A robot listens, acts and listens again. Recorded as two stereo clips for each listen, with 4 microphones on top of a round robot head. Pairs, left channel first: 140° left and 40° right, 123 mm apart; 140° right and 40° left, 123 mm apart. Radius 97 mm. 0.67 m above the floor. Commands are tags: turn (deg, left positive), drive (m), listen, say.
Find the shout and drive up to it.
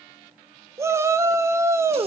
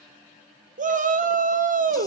<turn deg="30"/>
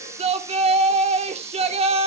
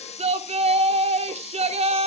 <drive m="1.0"/>
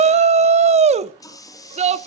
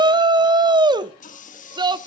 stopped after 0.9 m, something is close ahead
<turn deg="-10"/>
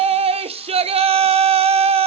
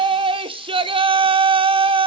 <say>Arrived at the shout, straight ahead.</say>